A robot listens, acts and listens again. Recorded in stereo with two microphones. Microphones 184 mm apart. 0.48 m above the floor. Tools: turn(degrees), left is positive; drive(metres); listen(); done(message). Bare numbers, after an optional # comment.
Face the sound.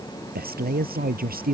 # The man speaking: about 50° right or 130° right.
turn(-50)
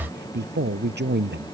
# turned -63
# So it is at 70° right.
turn(-70)
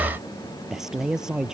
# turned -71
done("Facing the man speaking.")